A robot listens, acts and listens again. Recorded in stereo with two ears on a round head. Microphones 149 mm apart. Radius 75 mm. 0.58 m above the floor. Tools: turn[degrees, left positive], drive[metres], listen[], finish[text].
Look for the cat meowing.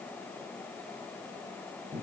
Action: listen[]
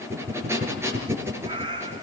Thought: The cat meowing: about 25° right or 155° right.
Action: turn[-25]
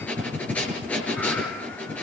Action: listen[]
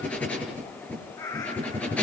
Thought: So it is at 20° left.
Action: turn[20]
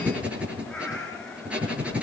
Action: finish[Found it: a cat meowing, straight ahead, over 4 m away.]